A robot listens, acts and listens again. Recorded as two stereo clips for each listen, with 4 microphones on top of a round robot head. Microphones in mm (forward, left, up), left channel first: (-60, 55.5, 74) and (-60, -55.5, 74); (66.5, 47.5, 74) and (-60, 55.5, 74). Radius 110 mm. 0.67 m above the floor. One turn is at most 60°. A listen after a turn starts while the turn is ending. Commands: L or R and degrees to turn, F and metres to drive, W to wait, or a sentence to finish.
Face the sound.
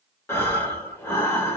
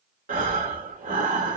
L60
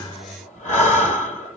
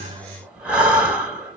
L60
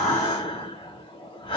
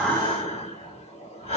L40
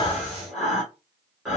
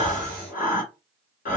Facing the breathing.